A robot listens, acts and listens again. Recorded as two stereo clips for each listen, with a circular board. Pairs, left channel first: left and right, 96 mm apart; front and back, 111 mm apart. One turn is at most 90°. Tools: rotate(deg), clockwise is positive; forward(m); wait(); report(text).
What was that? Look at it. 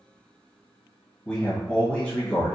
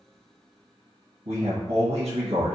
rotate(-90)
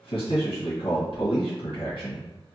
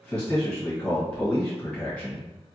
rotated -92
rotate(-80)
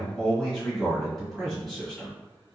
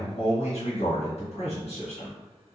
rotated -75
report("Found it: a man speaking, straight ahead.")